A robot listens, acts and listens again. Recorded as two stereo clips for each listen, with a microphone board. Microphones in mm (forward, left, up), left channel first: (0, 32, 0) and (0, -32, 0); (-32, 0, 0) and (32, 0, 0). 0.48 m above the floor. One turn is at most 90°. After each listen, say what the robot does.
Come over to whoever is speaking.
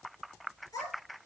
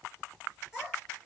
Turn 80° left.
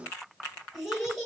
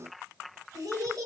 Drive 1.0 m forward.
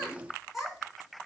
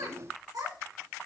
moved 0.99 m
Drive 1.0 m forward.
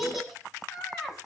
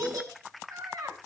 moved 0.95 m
Drive 1.0 m forward.
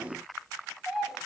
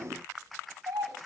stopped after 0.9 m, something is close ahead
Arrived at the child speaking, straight ahead.